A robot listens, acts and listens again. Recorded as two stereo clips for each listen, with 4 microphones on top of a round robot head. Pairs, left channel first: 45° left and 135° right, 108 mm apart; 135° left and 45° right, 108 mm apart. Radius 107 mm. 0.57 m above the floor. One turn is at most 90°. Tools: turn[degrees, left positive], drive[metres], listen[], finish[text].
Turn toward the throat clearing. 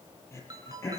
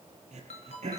Thought: The throat clearing: 25° right.
Action: turn[-25]
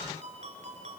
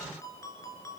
Action: listen[]
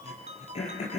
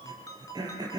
Thought: The throat clearing is now 10° left.
Action: turn[10]
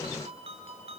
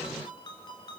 Action: listen[]
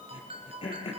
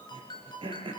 Action: finish[Found it: throat clearing, straight ahead, over 4 m away.]